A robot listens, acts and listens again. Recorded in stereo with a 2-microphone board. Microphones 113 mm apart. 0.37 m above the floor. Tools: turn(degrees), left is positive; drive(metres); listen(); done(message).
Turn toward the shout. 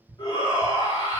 turn(degrees=35)
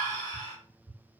turn(degrees=105)
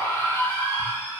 turn(degrees=30)
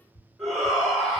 done("Found it: a shout, straight ahead, 1 to 2 m away.")